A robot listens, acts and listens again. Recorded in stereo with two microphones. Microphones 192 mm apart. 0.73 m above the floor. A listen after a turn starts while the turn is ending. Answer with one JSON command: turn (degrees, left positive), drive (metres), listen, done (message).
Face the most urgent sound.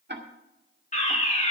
{"turn": 40}
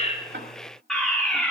{"done": "Facing the fire alarm."}